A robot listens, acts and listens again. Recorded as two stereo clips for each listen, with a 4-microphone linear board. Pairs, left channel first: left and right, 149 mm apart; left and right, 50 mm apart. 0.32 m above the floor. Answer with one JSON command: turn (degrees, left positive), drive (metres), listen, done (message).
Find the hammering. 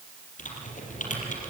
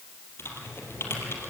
{"listen": true}
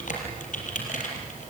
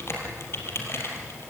{"listen": true}
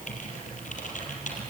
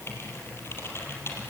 {"done": "I can't make out hammering, only typing on a keyboard."}